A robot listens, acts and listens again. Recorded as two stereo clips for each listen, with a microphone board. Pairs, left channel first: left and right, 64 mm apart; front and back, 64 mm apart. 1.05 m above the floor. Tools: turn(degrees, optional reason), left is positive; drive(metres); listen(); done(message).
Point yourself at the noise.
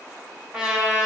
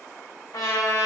turn(degrees=-20, reason="The trumpet: 20° right.")
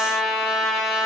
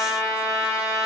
done("Facing the trumpet.")